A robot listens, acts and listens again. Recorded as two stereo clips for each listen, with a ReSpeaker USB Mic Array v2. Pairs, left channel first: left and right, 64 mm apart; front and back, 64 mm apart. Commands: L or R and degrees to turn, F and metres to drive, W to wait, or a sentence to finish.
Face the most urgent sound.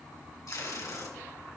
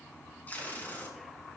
W
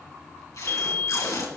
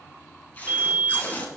L125
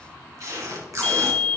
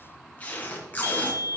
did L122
Facing the fire alarm, 2 to 4 m away.